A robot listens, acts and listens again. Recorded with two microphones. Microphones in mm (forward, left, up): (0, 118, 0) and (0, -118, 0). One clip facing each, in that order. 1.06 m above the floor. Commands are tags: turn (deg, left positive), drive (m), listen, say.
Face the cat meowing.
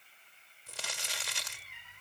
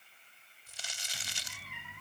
<turn deg="-70"/>
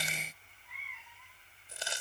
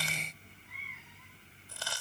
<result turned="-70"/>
<turn deg="-45"/>
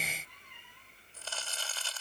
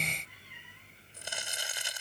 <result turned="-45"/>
<turn deg="-10"/>
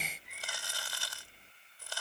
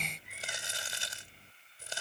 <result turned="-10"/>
<say>Found it: a cat meowing, straight ahead.</say>